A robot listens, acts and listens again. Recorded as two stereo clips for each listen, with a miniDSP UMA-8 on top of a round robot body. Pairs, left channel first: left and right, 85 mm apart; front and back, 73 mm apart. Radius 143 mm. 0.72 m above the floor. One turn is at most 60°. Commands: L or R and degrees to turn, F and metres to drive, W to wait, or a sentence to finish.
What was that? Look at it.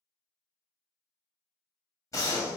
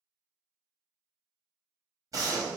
L60
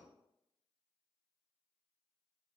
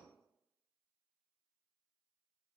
L60
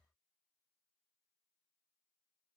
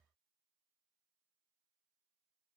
L20
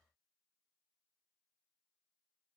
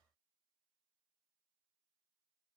Facing where the gunshot came from. I can't hear it now.